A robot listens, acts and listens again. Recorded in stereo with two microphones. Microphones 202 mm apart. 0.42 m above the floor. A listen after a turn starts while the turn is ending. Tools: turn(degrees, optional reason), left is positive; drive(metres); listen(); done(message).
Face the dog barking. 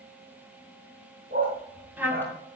turn(degrees=-50, reason="The dog barking: about 50° right or 130° right.")
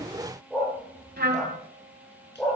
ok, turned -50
done("Facing the dog barking, 2 to 4 m away.")